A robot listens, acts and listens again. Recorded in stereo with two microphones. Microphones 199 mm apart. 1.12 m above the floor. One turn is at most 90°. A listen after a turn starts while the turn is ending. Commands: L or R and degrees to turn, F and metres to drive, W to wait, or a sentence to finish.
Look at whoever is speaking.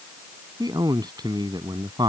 R20
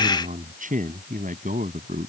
R90
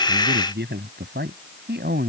R60
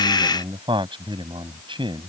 R25
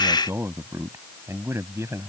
R15
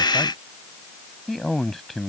Facing the man speaking.